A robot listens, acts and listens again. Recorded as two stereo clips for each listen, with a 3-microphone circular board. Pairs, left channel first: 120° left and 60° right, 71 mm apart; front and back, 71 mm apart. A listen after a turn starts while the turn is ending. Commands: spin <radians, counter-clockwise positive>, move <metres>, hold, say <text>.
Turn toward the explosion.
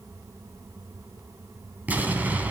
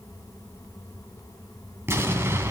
spin -2.18
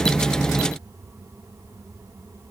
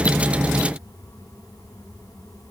say I heard an explosion from this way, but can't make it out now.